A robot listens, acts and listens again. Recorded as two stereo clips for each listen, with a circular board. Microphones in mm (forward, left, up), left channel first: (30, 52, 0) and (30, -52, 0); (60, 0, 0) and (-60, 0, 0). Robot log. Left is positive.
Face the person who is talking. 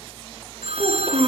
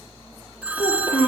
note: The child speaking: 50° right.
cmd yaw -50
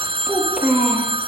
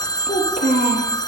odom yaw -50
end: Found it: a child speaking, straight ahead.